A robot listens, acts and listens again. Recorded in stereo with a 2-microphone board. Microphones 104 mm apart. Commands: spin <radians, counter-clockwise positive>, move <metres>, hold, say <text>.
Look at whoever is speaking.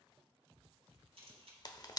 hold
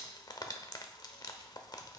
hold
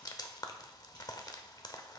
say I can't make out anyone speaking, only a camera shutter and frying.